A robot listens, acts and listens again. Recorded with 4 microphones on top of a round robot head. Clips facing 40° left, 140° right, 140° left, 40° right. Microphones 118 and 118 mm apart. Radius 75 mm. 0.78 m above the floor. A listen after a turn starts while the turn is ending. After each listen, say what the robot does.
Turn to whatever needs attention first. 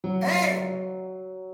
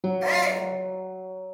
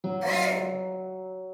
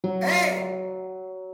Turn 25° right.
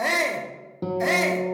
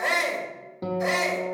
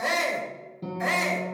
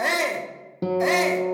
Turn 15° left.
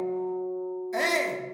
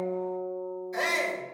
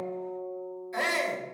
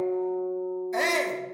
Facing the shout, 1 to 2 m away.